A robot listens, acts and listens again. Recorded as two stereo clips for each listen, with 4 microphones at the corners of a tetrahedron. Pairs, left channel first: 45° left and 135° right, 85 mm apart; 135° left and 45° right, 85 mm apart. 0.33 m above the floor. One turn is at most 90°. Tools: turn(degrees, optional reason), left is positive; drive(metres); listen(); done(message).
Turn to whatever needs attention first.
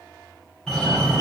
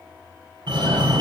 turn(degrees=-40, reason="The fire alarm: 40° right.")
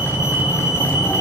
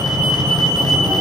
done("Facing the fire alarm.")